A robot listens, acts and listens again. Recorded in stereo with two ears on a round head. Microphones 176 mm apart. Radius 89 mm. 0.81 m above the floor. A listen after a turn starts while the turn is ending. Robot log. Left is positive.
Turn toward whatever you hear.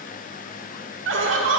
note: The laughter: about 65° right or 115° right.
cmd yaw -65
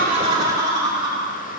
note: So it is at 20° right.
cmd yaw -20
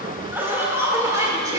note: The laughter is now 15° right.
cmd yaw -15
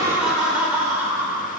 note: The laughter is now 10° right.
cmd yaw -10
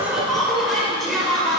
end: Facing the laughter.